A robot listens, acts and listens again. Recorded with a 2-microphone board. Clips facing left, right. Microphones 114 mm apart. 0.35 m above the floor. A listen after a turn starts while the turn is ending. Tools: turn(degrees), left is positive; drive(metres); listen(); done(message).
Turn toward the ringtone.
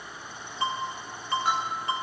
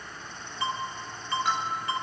turn(degrees=25)
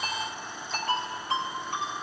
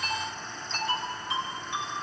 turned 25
turn(degrees=130)
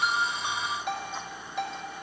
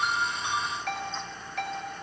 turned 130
turn(degrees=20)
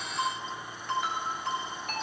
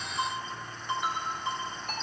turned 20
done("Facing the ringtone.")